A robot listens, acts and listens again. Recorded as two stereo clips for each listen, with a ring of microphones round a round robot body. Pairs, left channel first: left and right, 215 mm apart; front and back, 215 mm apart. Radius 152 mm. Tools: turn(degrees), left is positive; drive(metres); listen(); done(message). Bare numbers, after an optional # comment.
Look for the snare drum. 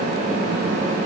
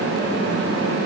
listen()
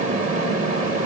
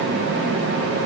listen()
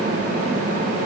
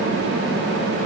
done("I can't make out a snare drum.")